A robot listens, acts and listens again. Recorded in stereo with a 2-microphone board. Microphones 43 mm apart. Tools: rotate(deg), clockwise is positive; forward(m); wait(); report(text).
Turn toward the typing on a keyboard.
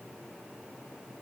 wait()
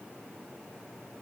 wait()
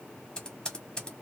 rotate(-20)
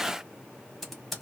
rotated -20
report("Facing the typing on a keyboard.")